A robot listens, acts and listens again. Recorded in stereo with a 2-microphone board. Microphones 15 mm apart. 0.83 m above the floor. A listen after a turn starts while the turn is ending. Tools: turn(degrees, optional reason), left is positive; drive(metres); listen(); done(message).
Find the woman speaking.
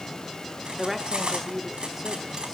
turn(degrees=-30)
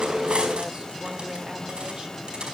listen()
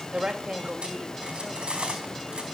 turn(degrees=-120, reason="So it is at 120° right.")
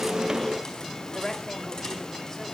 turn(degrees=20, reason="The woman speaking is now 20° left.")
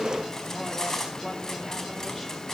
listen()
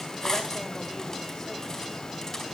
listen()
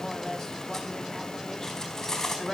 turn(degrees=10, reason="The woman speaking is now 10° left.")
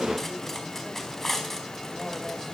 listen()
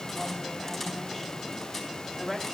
done("Found it: a woman speaking, straight ahead, over 4 m away.")